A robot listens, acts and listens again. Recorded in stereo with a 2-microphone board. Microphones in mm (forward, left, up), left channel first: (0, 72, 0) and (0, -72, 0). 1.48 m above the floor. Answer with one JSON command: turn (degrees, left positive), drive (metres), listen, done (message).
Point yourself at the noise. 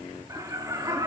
{"turn": -25}
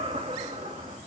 {"turn": -130}
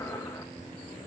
{"listen": true}
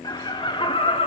{"turn": 40}
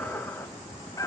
{"turn": 25}
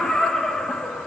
{"done": "Facing the laughter."}